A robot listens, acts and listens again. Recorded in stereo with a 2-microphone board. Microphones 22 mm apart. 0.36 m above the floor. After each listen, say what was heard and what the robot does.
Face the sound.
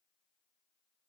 Keep listening.
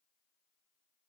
Keep listening.
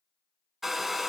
Turn 30° right.
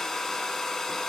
So it is at 25° left. Turn 25° left.
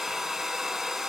The hair dryer is now 15° right. Turn 15° right.
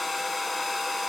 Found it: a hair dryer, straight ahead, under 1 m away.